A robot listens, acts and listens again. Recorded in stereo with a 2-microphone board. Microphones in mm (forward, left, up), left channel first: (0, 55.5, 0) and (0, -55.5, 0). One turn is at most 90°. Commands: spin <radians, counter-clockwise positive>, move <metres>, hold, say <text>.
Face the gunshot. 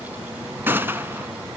spin -0.35
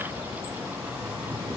hold
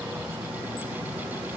say I heard a gunshot, but can't make it out now. It was about straight ahead or 140° right.